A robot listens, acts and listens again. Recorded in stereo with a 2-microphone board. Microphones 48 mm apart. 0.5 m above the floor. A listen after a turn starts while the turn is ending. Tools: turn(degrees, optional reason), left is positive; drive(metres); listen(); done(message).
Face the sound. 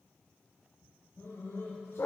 turn(degrees=70, reason="The dog barking: about 70° left or 110° left.")
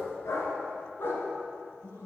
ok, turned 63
turn(degrees=65, reason="So it is at 65° left.")
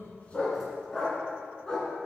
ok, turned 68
turn(degrees=15, reason="The dog barking is now 15° left.")
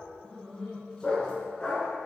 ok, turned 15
turn(degrees=15, reason="The dog barking is now 15° left.")
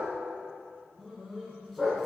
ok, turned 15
done("Facing the dog barking, 2 to 4 m away.")